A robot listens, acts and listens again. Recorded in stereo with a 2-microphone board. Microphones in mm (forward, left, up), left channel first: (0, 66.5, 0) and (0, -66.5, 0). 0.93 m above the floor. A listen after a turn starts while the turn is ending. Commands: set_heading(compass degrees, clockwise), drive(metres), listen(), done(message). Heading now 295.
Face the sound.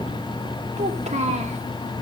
set_heading(350)
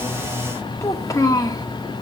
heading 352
set_heading(322)
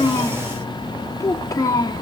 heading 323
set_heading(293)
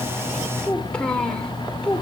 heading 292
set_heading(282)
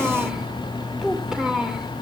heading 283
done("Found it: a child speaking, straight ahead.")